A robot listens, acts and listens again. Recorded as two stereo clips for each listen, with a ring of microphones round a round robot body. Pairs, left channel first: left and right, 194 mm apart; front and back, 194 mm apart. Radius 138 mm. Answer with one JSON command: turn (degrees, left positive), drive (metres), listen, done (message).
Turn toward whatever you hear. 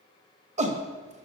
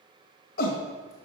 {"turn": -40}
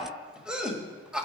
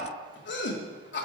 {"done": "Found it: a shout, straight ahead, 1 to 2 m away."}